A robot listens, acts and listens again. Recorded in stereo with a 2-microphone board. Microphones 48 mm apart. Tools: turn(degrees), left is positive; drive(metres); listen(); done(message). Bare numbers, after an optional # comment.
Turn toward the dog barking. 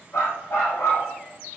# The dog barking: about 75° left or 105° left.
turn(75)
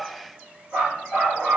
done("Facing the dog barking, over 4 m away.")